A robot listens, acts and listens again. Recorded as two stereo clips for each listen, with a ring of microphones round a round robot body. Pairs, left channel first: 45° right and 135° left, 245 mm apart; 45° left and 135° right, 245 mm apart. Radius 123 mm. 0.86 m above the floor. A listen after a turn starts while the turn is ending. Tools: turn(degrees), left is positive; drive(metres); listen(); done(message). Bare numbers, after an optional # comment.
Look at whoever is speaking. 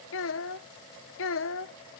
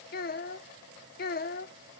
# The child speaking: 10° right.
turn(-10)
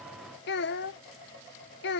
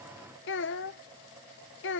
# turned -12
done("Facing the child speaking.")